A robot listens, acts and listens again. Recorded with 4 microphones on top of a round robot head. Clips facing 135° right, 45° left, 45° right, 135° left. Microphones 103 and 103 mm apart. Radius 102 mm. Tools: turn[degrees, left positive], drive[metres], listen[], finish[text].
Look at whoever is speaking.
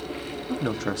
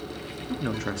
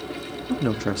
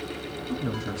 Thought: The man speaking: 60° right.
Action: turn[-60]
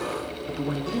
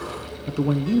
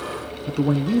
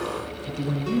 Action: finish[Found it: a man speaking, straight ahead.]